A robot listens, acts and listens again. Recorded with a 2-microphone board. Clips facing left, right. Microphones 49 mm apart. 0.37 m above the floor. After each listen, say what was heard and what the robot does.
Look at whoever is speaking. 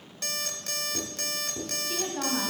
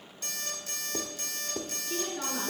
The woman speaking: about 50° left or 130° left. Turn 50° left.
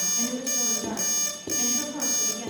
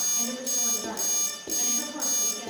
Found it: a woman speaking, straight ahead.